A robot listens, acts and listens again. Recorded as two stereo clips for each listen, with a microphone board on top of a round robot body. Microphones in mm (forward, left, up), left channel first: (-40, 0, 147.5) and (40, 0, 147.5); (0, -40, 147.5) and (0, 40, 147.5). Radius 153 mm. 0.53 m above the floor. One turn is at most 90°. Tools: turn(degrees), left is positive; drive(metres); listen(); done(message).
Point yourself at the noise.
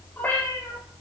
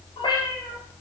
turn(degrees=-90)
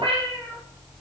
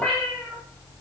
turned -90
turn(degrees=-10)
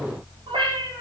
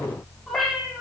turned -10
done("Found it: a cat meowing, straight ahead.")